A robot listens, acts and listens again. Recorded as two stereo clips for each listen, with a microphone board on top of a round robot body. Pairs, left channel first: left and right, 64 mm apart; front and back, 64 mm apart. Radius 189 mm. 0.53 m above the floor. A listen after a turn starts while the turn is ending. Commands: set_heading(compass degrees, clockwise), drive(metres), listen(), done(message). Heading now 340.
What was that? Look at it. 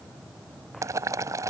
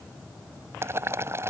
set_heading(110)
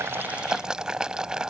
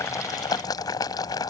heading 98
set_heading(108)
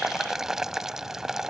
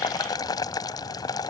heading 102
set_heading(112)
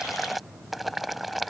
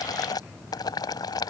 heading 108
done("Facing the boiling.")